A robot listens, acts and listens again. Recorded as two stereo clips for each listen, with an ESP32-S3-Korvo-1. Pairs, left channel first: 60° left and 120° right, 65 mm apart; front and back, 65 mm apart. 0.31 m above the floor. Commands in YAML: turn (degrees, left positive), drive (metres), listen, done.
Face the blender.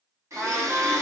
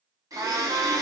turn: -155
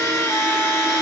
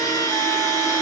turn: 15
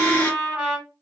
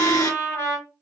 done: "Facing the blender."